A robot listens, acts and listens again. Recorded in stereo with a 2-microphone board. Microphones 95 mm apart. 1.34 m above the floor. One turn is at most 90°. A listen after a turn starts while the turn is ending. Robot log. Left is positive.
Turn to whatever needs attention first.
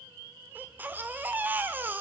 note: The baby crying: about 20° right or 160° right.
cmd yaw -20
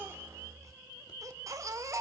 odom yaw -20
note: So it is at 140° right.
cmd yaw -90
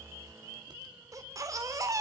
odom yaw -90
note: The baby crying is now 40° right.
cmd yaw -40
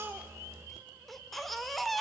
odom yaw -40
end: Found it: a baby crying, straight ahead.